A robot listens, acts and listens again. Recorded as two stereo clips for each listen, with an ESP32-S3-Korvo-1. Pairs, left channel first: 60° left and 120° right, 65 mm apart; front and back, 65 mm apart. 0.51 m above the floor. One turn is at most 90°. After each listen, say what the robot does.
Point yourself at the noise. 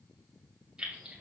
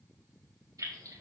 Turn 90° left.
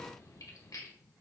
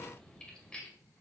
Turn 75° left.
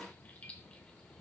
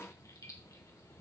Found it: keys jangling, straight ahead.